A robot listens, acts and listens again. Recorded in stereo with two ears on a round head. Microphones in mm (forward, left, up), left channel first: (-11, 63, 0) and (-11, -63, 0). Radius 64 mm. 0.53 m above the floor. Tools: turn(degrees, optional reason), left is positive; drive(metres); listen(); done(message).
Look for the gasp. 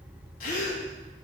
turn(degrees=65, reason="The gasp: about 65° left or 115° left.")
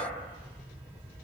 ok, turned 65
listen()
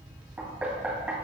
done("I heard a gasp, but can't make it out now. It was about straight ahead or 50° left.")